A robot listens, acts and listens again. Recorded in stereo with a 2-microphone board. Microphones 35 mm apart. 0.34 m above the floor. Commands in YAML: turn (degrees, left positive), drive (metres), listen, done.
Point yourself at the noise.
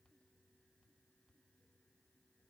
listen: true
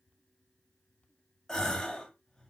turn: 15
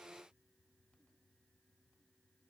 listen: true
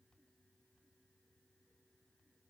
done: "I heard a gasp, but can't make it out now. It was about straight ahead or 150° left."